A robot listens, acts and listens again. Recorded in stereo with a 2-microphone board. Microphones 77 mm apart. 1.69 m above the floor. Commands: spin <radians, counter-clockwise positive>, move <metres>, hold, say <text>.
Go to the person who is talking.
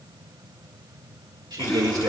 spin -1.13
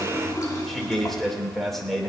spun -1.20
move 1.0
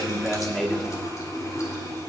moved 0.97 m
move 1.0
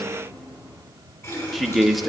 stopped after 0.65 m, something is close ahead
say Arrived at the man speaking, straight ahead.